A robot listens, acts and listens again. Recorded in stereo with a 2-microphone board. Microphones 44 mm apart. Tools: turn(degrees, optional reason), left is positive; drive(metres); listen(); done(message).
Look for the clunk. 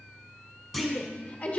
turn(degrees=-30)
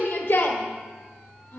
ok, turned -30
listen()
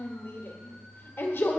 done("I heard a clunk, but can't make it out now. It was about 25° left or 145° right.")